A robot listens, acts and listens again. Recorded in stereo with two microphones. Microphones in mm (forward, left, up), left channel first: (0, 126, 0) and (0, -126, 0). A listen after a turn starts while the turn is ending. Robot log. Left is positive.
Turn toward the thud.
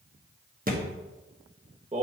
note: The thud: about 35° right or 145° right.
cmd yaw -35
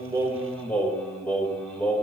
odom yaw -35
cmd idle
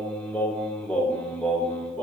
end: I heard a thud, but can't make it out now. It was about straight ahead or 110° right.